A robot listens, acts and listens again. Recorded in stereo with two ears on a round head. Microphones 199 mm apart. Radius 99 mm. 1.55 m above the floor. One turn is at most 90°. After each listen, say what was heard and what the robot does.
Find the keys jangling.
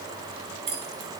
The keys jangling: about 25° right or 155° right. Turn 25° right.
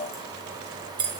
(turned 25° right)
The keys jangling: about 20° right or 160° right. Turn 20° right.
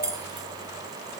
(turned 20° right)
Turn 30° right.
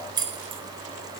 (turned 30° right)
The keys jangling: about 20° right or 160° right. Turn 20° right.
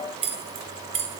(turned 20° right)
The keys jangling: about 25° right or 155° right. Turn 25° right.
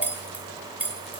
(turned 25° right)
Found it: keys jangling, straight ahead, 1 to 2 m away.